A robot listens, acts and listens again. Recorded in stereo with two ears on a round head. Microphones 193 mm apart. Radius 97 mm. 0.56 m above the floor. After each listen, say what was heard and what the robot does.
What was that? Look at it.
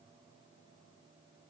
Keep listening.
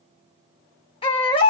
The baby crying: about 25° left or 155° left. Turn 25° left.
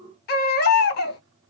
So it is at 130° left. Turn 130° left.
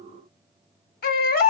The baby crying is now 45° left. Turn 45° left.
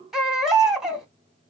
Found it: a baby crying, straight ahead, 1 to 2 m away.